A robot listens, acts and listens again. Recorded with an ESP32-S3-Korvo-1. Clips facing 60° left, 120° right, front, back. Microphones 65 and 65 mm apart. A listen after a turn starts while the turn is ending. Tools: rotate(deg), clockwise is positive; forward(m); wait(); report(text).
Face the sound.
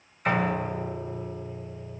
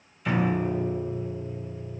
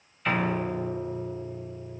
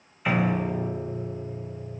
rotate(-100)
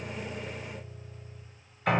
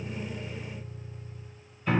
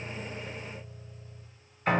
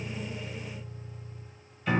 rotate(-40)
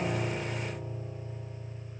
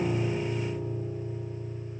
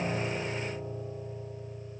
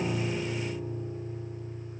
rotate(10)
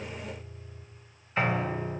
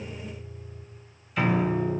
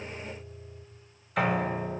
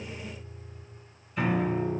report("Found it: a piano, straight ahead, 2 to 4 m away.")